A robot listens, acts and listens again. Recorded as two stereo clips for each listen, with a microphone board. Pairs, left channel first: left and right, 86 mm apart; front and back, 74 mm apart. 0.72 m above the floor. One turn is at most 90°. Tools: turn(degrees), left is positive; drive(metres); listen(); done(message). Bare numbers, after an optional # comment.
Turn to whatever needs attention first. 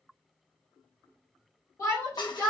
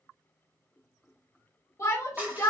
# The shout: 45° left.
turn(45)
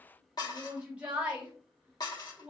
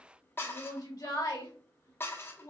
# The shout is now 15° right.
turn(-15)
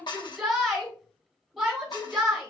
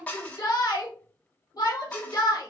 done("Found it: a shout, straight ahead, 1 to 2 m away.")